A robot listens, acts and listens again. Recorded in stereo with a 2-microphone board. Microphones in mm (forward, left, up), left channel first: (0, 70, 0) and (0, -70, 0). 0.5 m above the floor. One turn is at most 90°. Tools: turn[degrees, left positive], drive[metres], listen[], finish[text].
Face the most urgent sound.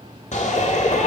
Thought: The shout: about 60° left or 120° left.
Action: turn[60]
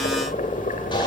Action: listen[]
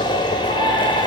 Thought: So it is at 40° left.
Action: turn[40]
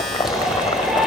Action: finish[Facing the shout.]